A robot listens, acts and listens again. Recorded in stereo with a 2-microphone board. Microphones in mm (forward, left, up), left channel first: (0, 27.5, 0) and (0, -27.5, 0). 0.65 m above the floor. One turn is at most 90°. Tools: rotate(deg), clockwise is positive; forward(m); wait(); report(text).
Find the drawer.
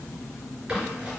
wait()
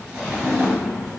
rotate(-20)
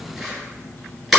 wait()
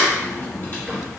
wait()
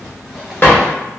rotate(-90)
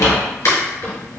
rotate(-70)
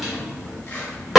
report("Found it: a drawer, straight ahead.")